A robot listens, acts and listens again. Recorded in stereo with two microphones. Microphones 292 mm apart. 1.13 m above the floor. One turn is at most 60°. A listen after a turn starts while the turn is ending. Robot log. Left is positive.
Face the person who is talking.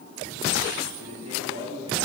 note: The man speaking: about 60° right or 120° right.
cmd yaw -60
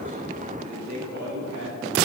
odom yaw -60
note: So it is at 75° right.
cmd yaw -60
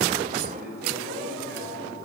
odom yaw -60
note: The man speaking is now 35° right.
cmd yaw -35
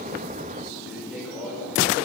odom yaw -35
end: Found it: a man speaking, straight ahead.